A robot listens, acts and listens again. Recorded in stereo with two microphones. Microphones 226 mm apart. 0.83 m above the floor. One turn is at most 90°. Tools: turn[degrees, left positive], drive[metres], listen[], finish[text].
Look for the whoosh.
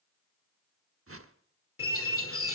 Action: turn[-90]
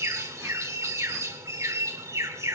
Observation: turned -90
Action: listen[]
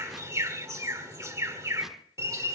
Action: listen[]
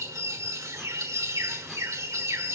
Action: finish[Facing where the whoosh came from. I can't hear it now.]